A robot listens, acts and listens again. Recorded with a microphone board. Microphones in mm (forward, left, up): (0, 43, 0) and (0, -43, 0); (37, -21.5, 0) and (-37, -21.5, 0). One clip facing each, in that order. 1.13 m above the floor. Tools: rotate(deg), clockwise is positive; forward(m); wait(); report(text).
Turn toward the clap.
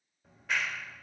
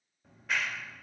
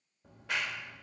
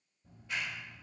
report("Found it: a clap, straight ahead, 2 to 4 m away.")